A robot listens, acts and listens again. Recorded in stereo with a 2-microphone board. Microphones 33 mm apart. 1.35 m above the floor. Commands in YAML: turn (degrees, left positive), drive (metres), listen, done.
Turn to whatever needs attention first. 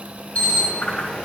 turn: 50
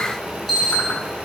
done: "Found it: an alarm, straight ahead."